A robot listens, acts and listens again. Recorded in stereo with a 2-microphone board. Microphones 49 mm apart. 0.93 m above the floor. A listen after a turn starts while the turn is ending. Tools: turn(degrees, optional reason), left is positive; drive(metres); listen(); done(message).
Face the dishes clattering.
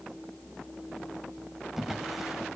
listen()
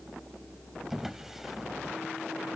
listen()
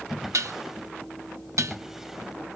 turn(degrees=-90)
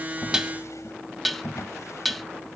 done("Facing the dishes clattering, 1 to 2 m away.")